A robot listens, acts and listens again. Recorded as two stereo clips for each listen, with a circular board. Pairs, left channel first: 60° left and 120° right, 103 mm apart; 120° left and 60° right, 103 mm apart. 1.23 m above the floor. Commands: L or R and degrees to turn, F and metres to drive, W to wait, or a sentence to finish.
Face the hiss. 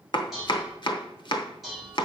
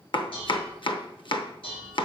W
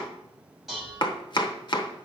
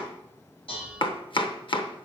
W
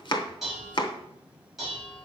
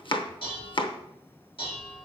I can't make out a hiss to turn to.